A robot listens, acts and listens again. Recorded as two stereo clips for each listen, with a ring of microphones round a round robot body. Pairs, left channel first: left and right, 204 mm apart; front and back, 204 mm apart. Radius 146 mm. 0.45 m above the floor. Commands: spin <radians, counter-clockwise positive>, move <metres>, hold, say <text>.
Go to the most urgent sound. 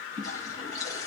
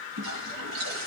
hold
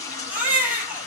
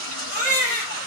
spin -2.09
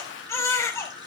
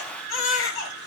spin 0.26
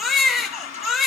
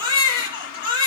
move 1.0
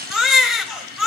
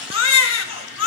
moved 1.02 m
move 1.0
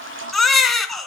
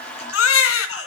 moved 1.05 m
move 1.0
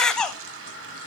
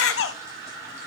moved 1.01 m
move 1.0
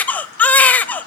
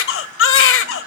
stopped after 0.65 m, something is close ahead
say I am next to the baby crying.